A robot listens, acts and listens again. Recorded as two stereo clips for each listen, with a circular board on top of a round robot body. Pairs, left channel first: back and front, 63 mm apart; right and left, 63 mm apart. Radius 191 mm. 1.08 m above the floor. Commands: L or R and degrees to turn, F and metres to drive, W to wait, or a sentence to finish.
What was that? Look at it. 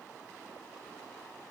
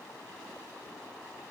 W
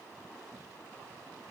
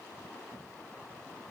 W
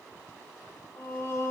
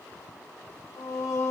R130
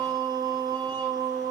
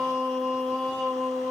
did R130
Facing the singing.